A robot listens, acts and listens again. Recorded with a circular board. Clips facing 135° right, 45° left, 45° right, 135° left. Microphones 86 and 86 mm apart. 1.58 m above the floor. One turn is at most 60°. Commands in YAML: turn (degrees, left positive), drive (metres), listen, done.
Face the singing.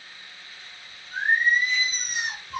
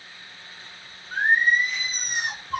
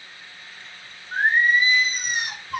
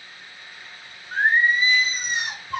turn: 60
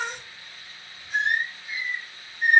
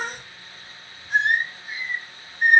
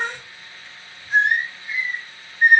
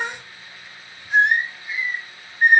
turn: 60
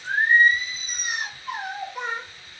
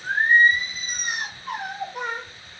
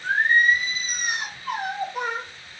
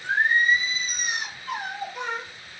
done: "Facing the singing."